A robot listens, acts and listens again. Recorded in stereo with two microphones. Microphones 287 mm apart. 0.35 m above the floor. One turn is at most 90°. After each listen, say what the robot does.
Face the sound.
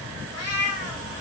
Turn 40° right.
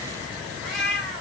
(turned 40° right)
Found it: a cat meowing, straight ahead, 1 to 2 m away.